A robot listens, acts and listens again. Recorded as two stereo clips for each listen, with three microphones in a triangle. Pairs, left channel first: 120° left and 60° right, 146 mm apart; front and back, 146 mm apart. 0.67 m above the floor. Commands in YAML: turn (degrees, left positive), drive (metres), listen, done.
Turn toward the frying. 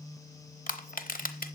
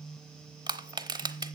listen: true
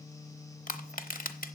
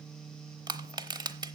listen: true
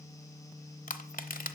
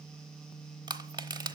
done: "I can't make out frying, only crushing."